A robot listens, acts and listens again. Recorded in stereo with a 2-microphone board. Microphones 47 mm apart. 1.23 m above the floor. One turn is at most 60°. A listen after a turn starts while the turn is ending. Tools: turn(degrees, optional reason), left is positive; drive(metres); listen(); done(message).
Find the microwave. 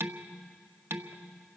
listen()
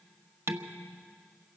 listen()
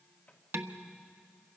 turn(degrees=30, reason="The microwave: about 30° left or 150° left.")
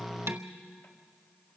listen()
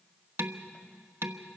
listen()
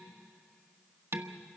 done("I heard a microwave, but can't make it out now. It was about straight ahead or 120° left.")